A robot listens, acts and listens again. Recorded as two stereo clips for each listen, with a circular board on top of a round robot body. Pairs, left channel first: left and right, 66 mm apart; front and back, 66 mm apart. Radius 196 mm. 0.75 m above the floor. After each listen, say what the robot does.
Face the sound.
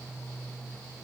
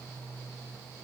Keep listening.
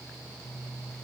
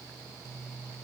Keep listening.
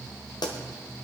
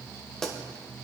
Turn 80° left.
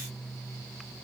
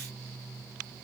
Facing where the pop came from. I can't hear it now.